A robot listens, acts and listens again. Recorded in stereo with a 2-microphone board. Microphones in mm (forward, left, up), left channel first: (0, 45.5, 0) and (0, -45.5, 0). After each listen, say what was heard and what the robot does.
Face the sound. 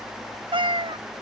The cat meowing: about 70° right or 110° right. Turn 70° right.
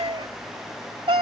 So it is at 85° right. Turn 85° right.
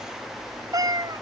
The cat meowing is now 50° right. Turn 50° right.
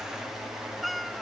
Facing the cat meowing.